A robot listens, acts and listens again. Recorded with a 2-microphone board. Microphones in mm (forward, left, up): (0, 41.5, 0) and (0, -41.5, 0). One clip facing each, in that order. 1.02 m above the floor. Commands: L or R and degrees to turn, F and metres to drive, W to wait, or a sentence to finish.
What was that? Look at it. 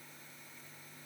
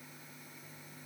W
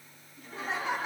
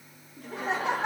R70
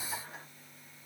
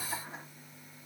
W
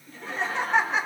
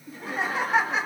Found it: laughter, straight ahead.